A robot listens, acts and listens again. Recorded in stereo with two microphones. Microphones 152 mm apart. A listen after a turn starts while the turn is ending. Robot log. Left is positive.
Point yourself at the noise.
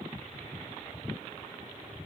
cmd idle
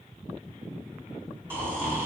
note: The snoring: about 15° right or 165° right.
cmd yaw -15
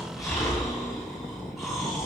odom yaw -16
end: Facing the snoring.